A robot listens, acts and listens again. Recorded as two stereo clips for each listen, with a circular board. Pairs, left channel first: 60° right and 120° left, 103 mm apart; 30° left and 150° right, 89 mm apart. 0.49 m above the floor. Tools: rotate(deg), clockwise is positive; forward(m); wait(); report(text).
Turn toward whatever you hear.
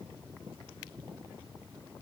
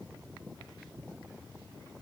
wait()
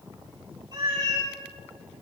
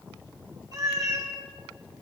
rotate(-165)
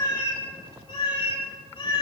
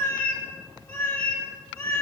rotate(25)
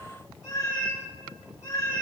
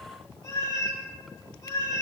report("Facing the cat meowing.")